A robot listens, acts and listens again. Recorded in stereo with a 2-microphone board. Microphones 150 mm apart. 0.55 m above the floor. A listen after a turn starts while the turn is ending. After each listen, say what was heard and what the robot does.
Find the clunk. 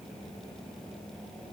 Keep listening.
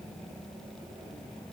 Keep listening.
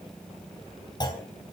The clunk: about 30° left or 150° left. Turn 30° left.
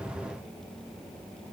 Keep listening.
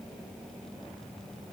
I heard a clunk, but can't make it out now. It was about straight ahead or 120° left.